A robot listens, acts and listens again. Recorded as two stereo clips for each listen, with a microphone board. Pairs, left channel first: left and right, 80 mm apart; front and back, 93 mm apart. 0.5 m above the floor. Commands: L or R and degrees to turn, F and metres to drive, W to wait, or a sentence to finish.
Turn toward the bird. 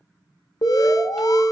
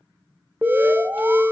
W
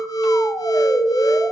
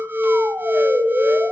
W
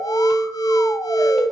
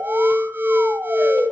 I can't make out a bird, only an alarm.